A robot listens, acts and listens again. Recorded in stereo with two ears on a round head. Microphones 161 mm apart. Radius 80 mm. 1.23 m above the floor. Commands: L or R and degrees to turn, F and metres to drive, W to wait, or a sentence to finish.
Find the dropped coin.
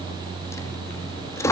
L15
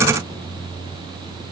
W
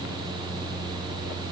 I heard a dropped coin, but can't make it out now. It was about straight ahead or 150° left.